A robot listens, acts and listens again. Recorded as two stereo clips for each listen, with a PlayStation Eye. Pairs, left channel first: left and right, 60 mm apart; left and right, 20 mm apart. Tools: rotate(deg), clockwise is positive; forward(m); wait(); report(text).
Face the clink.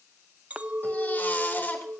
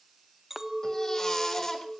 rotate(20)
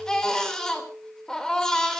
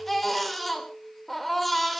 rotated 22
report("Facing the clink.")